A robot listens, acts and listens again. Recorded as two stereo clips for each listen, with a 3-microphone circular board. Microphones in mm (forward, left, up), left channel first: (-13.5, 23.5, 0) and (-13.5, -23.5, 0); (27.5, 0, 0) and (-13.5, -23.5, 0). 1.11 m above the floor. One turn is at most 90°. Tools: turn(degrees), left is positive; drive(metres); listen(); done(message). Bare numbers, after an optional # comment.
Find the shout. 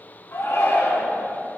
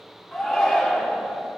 # The shout: 130° left.
turn(90)
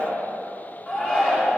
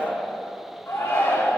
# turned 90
# The shout is now 30° left.
turn(30)
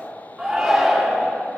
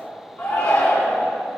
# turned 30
done("Found it: a shout, straight ahead.")